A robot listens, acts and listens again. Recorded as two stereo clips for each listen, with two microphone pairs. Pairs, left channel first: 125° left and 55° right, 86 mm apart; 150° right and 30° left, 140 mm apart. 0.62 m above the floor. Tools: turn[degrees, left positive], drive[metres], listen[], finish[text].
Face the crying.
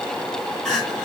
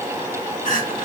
Thought: The crying: 145° right.
Action: turn[-145]
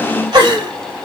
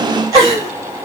Thought: The crying is now 35° right.
Action: turn[-35]
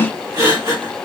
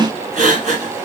Action: finish[Found it: crying, straight ahead, 2 to 4 m away.]